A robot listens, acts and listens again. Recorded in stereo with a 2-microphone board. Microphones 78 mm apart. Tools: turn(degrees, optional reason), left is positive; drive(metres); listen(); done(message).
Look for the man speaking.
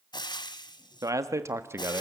turn(degrees=-30, reason="The man speaking: about 30° right or 150° right.")
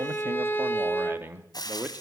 turn(degrees=-20, reason="The man speaking: about 20° right or 160° right.")
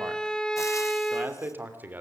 turn(degrees=-20, reason="The man speaking: about 20° right or 160° right.")
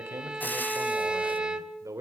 turn(degrees=-40, reason="The man speaking: about 40° right or 140° right.")
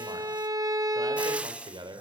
turn(degrees=-105, reason="So it is at 105° right.")
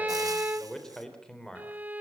turn(degrees=10, reason="The man speaking is now 10° left.")
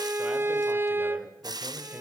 listen()
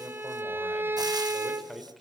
done("Facing the man speaking, 2 to 4 m away.")